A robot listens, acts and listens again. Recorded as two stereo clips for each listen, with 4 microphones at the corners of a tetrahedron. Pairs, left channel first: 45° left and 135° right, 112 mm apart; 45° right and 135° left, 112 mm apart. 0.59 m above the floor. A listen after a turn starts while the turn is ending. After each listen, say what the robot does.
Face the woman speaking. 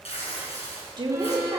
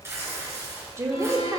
Turn 175° right.
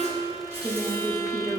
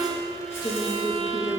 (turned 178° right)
Turn 75° right.
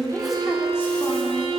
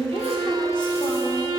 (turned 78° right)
Keep listening.
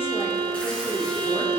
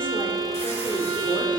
Keep listening.
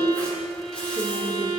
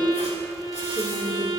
Turn 20° right.
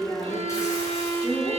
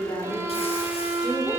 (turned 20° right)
Facing the woman speaking, 1 to 2 m away.